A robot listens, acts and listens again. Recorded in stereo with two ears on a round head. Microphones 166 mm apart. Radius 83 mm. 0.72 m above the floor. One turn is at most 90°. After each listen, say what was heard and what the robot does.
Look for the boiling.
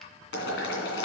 The boiling: about 70° left or 110° left. Turn 70° left.
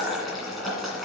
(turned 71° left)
Found it: boiling, straight ahead.